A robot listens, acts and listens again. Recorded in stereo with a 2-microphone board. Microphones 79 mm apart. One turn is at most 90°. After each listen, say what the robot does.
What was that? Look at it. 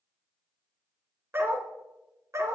Turn 40° right.
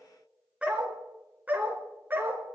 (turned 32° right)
Turn 25° right.
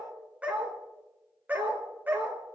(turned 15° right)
Turn 25° right.
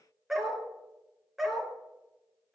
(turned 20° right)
Found it: a dog barking, straight ahead, 2 to 4 m away.